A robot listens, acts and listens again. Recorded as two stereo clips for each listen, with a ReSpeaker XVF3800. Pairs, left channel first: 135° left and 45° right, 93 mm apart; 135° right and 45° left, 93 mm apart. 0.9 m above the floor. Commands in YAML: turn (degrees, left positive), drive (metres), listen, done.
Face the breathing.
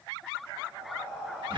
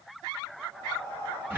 turn: 35
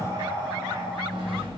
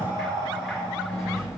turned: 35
turn: 15
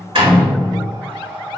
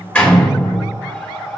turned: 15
done: "Found it: breathing, straight ahead, 1 to 2 m away."